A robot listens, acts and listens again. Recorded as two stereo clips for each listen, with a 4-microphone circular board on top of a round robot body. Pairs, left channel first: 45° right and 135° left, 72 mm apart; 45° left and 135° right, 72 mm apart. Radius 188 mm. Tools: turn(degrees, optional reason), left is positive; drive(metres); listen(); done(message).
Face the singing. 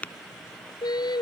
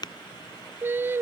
turn(degrees=-75, reason="The singing: 75° right.")
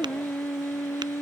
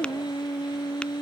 turn(degrees=15, reason="The singing is now 15° left.")
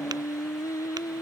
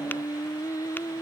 done("Found it: singing, straight ahead.")